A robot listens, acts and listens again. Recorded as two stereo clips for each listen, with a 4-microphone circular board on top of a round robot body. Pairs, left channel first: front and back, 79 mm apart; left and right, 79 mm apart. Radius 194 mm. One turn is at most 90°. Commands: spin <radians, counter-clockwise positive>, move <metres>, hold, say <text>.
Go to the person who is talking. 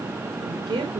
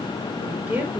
spin -1.57
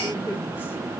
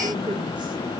spin -1.22
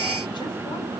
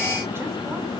hold
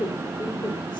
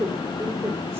spin -0.52
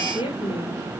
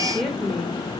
move 1.0
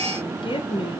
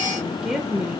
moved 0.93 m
spin -0.17
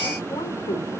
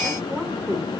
move 1.0
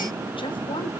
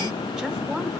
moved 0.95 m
hold
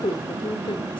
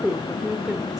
move 1.0
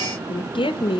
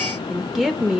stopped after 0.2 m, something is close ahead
say Arrived at the woman speaking, straight ahead.